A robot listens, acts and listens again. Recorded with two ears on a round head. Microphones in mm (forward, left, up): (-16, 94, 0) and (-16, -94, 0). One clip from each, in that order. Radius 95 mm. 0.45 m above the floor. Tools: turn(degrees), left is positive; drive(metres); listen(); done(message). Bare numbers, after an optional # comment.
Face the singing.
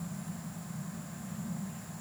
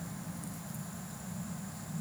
listen()
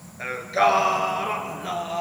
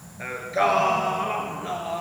# The singing: about 20° left or 160° left.
turn(20)
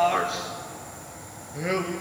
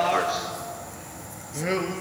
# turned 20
done("Found it: singing, straight ahead.")